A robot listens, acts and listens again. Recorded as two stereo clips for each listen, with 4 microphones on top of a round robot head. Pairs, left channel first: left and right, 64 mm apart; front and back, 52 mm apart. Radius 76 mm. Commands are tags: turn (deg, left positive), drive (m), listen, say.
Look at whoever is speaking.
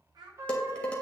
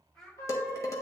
<turn deg="-85"/>
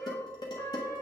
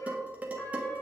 <listen/>
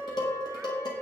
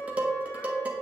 <listen/>
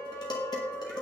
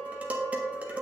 <say>Facing where the child speaking came from. I can't hear it now.</say>